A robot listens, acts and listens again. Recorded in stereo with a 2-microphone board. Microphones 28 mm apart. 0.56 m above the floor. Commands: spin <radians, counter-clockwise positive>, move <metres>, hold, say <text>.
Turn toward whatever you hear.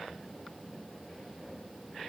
hold
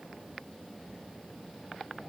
hold
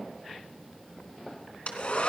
spin 0.87
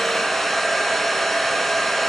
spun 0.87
say Found it: a hair dryer, straight ahead, 2 to 4 m away.